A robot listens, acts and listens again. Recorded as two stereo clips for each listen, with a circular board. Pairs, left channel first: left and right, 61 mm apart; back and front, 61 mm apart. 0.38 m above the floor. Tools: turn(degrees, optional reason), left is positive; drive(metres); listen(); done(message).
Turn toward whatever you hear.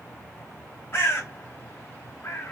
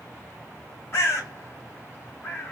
turn(degrees=135, reason="The bird: 135° left.")
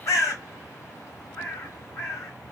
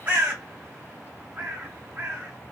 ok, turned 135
turn(degrees=60, reason="The bird is now 60° left.")
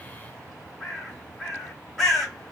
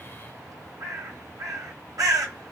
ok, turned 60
done("Found it: a bird, straight ahead.")